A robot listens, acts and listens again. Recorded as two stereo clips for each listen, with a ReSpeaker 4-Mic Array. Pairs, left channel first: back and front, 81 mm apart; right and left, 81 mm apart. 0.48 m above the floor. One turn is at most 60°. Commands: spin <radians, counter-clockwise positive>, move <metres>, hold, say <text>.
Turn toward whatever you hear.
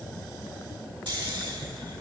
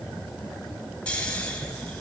spin -0.26
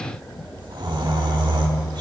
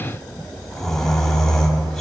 say Facing the snoring.